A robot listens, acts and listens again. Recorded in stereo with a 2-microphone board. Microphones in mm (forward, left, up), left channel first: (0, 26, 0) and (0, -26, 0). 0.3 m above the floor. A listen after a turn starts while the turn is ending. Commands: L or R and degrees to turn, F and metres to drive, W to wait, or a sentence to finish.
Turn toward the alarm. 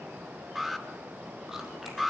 R30
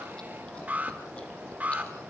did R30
R145
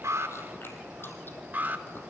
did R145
R35
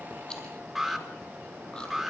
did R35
Facing the alarm.